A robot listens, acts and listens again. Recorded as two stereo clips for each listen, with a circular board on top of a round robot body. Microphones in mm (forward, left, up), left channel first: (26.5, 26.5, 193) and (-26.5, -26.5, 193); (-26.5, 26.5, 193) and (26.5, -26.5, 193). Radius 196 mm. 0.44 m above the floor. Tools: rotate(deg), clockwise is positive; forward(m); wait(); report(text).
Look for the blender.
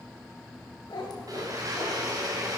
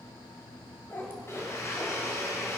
rotate(170)
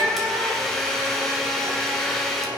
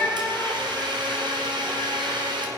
rotate(40)
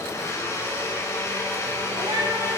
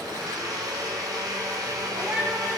rotate(10)
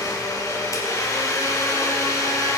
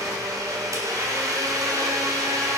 report("Found it: a blender, straight ahead.")